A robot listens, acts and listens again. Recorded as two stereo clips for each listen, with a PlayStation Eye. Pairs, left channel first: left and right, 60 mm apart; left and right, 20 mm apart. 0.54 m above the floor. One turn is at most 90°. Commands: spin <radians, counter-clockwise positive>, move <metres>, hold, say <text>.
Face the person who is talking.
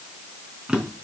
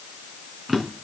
hold
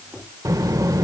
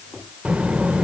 spin -1.22
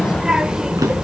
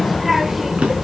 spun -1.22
spin -0.26
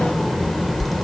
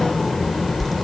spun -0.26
say Facing the child speaking.